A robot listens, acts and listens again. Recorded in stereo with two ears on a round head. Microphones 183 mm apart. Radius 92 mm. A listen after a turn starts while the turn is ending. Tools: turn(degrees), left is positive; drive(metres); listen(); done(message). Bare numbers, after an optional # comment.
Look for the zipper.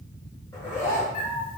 turn(30)
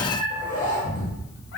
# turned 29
# So it is at 135° left.
turn(135)
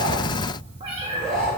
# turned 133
done("Found it: a zipper, straight ahead.")